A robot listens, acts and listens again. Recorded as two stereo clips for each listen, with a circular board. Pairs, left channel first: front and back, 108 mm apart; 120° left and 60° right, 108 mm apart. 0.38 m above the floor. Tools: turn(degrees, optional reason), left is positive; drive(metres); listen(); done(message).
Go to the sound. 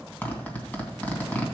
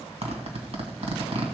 turn(degrees=-75, reason="The zipper: 75° right.")
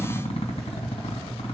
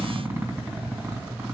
turn(degrees=10, reason="The zipper is now 10° left.")
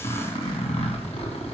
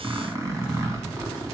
drive(metres=1.0)
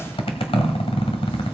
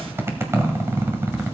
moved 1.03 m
drive(metres=1.0)
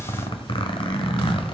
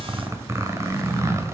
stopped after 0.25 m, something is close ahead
done("Arrived at the zipper, straight ahead.")